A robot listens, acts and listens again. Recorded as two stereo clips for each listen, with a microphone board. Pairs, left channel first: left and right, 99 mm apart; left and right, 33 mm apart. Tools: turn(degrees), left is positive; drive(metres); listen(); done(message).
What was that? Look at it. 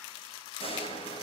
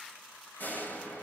turn(degrees=65)
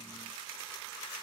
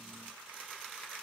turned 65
listen()
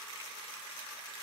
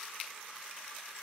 done("I heard a door slam, but can't make it out now. It was about straight ahead or 50° left.")